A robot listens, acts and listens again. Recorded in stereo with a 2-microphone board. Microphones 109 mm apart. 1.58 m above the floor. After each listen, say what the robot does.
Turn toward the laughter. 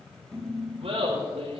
Turn 70° right.
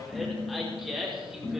Facing the laughter, over 4 m away.